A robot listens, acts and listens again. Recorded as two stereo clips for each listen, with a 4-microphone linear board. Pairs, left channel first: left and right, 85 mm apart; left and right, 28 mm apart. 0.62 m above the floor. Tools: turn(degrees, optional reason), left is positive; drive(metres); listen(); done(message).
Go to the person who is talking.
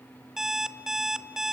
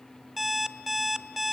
listen()
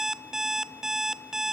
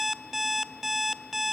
listen()
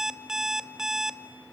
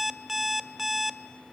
done("I can't make out anyone speaking, only an alarm clock.")